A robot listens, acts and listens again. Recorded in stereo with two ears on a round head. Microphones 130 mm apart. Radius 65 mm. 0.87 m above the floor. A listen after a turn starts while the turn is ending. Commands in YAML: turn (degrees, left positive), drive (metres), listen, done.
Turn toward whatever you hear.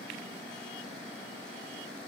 listen: true
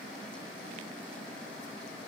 listen: true
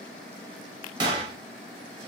turn: -30
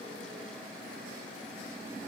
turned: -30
listen: true
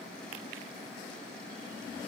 done: "I heard a gunshot, but can't make it out now. It was about straight ahead or 120° right."